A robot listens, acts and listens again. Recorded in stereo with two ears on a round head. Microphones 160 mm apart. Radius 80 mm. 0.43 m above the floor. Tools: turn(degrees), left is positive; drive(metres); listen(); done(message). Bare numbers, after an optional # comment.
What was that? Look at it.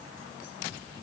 listen()
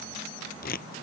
# The tearing paper: about 55° left or 125° left.
turn(55)
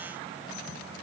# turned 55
listen()
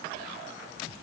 listen()
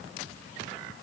done("I heard tearing paper, but can't make it out now. It was about straight ahead or 70° left.")